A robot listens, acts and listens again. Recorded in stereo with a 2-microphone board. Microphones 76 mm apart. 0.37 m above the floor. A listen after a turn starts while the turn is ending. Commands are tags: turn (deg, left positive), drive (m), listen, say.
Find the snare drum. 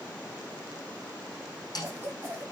<turn deg="60"/>
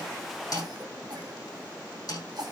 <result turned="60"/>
<turn deg="55"/>
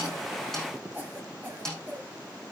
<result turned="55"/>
<say>Found it: a snare drum, straight ahead.</say>